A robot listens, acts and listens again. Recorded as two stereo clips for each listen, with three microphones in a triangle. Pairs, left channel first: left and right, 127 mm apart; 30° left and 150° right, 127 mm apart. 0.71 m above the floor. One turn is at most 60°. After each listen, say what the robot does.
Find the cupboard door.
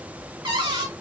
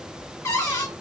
Turn 40° right.
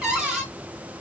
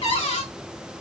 Facing the cupboard door.